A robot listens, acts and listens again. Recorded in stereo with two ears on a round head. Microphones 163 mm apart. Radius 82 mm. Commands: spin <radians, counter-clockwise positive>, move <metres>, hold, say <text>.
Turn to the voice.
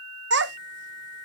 spin -1.13
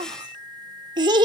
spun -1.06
spin -0.44
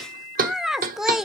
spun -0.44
say Found it: a child speaking, straight ahead.